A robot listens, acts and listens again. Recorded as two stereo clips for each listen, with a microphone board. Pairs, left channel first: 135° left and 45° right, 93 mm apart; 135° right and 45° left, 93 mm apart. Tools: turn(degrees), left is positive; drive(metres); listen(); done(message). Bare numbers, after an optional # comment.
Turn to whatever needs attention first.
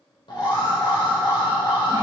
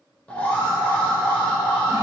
# The alarm: 155° left.
turn(155)
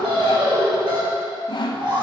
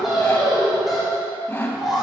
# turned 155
# The alarm is now 40° right.
turn(-40)
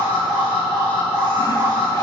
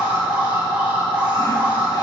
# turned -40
# The alarm is now 25° right.
turn(-25)
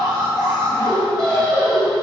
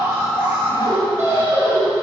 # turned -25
# The alarm is now 15° right.
turn(-15)
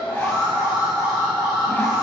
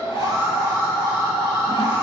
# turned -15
done("Facing the alarm, 1 to 2 m away.")